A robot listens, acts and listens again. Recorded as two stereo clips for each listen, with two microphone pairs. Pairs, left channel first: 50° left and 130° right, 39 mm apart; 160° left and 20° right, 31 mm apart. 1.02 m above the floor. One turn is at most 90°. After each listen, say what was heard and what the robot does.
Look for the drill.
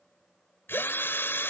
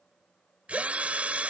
The drill: 30° left. Turn 30° left.
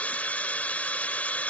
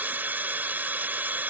Found it: a drill, straight ahead.